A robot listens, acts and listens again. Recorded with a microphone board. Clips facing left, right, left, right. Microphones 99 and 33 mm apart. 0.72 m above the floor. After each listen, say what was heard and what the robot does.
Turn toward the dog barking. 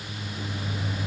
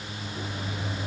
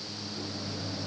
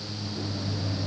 Keep listening.
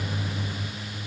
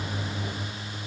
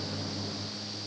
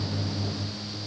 Keep listening.
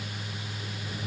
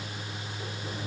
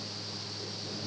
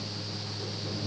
I can't make out a dog barking, only a microwave.